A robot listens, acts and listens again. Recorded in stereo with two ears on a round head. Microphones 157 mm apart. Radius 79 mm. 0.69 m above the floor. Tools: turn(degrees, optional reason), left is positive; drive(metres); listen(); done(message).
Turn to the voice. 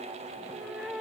listen()
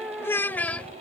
turn(degrees=30)
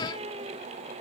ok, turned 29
listen()
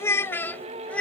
turn(degrees=30)
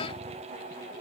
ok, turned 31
listen()
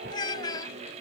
turn(degrees=155, reason="So it is at 155° left.")
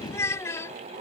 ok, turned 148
turn(degrees=15, reason="The child speaking is now 15° left.")
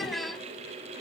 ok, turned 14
done("Found it: a child speaking, straight ahead.")